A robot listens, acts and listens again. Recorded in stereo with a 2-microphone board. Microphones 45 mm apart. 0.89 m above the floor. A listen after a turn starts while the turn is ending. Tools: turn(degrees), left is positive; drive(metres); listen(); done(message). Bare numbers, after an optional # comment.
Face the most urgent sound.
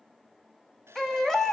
turn(30)
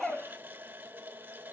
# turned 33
listen()
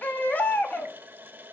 # So it is at 140° left.
turn(140)
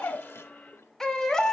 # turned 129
# The baby crying is now 10° left.
turn(10)
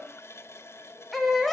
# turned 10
done("Found it: a baby crying, straight ahead.")